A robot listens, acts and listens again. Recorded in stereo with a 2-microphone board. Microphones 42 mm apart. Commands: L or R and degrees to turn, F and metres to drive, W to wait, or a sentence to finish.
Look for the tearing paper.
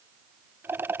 W
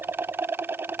W
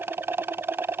I can't make out tearing paper, only a rattle.